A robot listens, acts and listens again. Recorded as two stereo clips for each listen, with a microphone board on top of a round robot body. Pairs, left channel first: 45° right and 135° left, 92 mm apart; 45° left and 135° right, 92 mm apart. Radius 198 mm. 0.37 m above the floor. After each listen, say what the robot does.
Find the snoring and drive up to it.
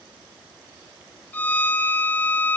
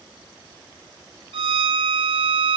Keep listening.
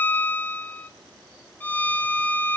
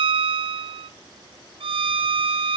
Keep listening.
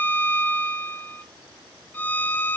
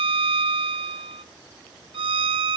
I can't make out snoring to turn to.